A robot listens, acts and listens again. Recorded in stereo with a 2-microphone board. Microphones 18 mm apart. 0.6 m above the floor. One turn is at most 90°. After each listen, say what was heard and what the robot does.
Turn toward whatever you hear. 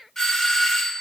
The doorbell: about 25° left or 155° left. Turn 25° left.
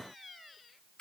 So it is at 125° left. Turn 90° left.
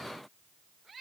Nothing new. It was at 35° left. Turn 35° left.
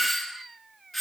The doorbell is now 10° left. Turn 10° left.
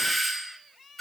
Found it: a doorbell, straight ahead, 2 to 4 m away.